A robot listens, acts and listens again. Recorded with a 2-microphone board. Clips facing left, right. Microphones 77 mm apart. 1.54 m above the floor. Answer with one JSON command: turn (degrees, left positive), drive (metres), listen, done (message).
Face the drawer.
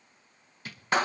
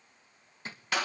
{"turn": -30}
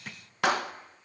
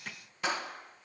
{"done": "Facing the drawer."}